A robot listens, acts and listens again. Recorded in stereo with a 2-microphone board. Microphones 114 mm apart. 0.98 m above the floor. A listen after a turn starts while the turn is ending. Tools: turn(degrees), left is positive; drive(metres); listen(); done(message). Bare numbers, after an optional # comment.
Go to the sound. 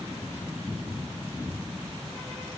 listen()
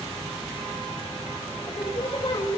# The singing: about 45° left or 135° left.
turn(45)
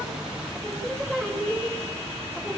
drive(1.0)
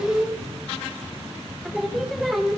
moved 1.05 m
drive(1.0)
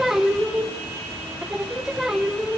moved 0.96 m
drive(1.0)
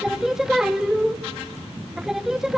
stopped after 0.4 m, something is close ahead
done("I am next to the singing.")